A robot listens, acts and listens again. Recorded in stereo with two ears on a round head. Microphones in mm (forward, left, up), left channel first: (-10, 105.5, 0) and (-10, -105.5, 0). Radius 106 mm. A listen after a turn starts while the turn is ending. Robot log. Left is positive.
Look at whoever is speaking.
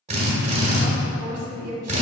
note: The woman speaking: about 70° right or 110° right.
cmd yaw -70
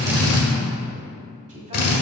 cmd idle
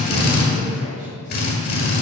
cmd idle
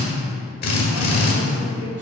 end: I heard a woman speaking, but can't make it out now. It was about straight ahead or 40° right.